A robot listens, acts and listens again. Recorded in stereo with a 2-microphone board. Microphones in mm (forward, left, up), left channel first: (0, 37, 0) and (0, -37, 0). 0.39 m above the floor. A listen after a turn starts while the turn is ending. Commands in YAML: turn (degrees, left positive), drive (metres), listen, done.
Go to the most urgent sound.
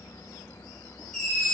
turn: 30
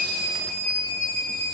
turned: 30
turn: 145
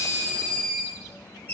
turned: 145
turn: 30
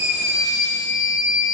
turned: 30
drive: 1.0
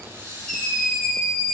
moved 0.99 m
drive: 1.0
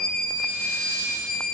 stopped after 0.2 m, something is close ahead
turn: 10
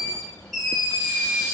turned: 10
done: "Arrived at the scream, straight ahead."